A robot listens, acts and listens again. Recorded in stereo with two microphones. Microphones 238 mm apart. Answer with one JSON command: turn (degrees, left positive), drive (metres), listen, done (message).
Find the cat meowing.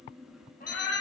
{"turn": 30}
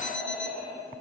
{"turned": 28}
{"turn": -10}
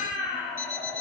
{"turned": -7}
{"turn": -15}
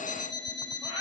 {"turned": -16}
{"turn": -15}
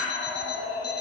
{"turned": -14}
{"turn": -10}
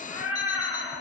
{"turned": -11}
{"done": "Found it: a cat meowing, straight ahead, 2 to 4 m away."}